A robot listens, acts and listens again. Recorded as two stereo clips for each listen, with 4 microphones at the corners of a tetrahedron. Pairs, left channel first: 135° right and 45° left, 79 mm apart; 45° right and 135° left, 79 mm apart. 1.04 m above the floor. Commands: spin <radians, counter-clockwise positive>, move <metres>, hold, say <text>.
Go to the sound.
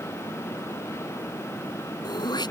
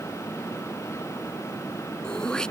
spin -2.18
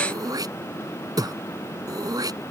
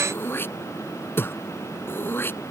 spin 0.17
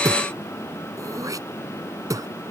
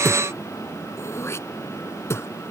move 1.0
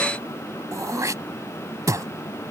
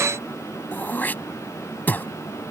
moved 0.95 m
spin 0.26
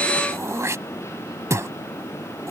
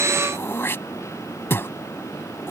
move 1.0
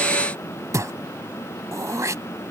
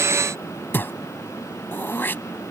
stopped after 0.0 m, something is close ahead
spin 0.17
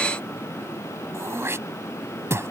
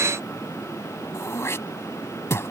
say I am next to the throat clearing.